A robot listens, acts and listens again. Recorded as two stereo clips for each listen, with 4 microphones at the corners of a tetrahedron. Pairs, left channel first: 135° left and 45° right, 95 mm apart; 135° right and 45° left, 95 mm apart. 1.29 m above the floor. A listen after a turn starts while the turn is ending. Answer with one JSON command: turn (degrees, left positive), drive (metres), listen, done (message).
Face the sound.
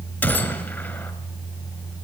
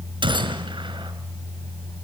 {"turn": 70}
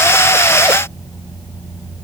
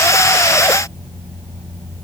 {"done": "Facing where the gunshot came from. I can't hear it now."}